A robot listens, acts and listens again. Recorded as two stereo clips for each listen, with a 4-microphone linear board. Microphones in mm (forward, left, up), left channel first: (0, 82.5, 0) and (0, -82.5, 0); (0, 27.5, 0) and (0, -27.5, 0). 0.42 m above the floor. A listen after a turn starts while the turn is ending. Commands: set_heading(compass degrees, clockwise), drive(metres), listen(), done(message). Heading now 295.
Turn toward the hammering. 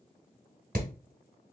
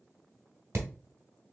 set_heading(355)
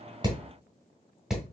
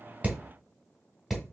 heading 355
done("Facing the hammering.")